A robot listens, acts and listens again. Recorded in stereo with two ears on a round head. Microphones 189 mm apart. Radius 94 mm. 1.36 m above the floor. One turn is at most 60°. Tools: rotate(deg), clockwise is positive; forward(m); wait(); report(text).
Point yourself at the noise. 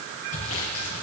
rotate(-60)
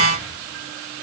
wait()
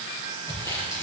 rotate(-15)
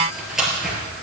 report("Found it: sawing, straight ahead.")